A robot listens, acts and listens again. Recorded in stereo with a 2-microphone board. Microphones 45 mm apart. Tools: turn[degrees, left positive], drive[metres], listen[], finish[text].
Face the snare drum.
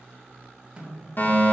Thought: The snare drum: about 20° right or 160° right.
Action: turn[-20]
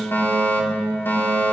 Action: listen[]
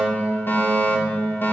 Action: listen[]
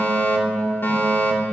Action: finish[I heard a snare drum, but can't make it out now. It was about straight ahead or 140° right.]